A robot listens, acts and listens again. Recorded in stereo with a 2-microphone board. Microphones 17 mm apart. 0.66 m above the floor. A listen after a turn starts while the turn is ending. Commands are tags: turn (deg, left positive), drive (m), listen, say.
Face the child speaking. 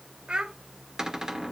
<turn deg="-70"/>
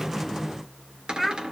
<say>Found it: a child speaking, straight ahead, 1 to 2 m away.</say>